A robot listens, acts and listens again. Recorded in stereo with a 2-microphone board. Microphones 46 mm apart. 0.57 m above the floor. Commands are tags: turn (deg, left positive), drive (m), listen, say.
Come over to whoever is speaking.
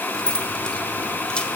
<listen/>
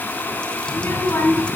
<turn deg="60"/>
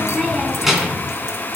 <drive m="1.0"/>
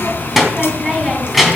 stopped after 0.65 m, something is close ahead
<say>Something is in my way. I am facing the child speaking but have not reached it.</say>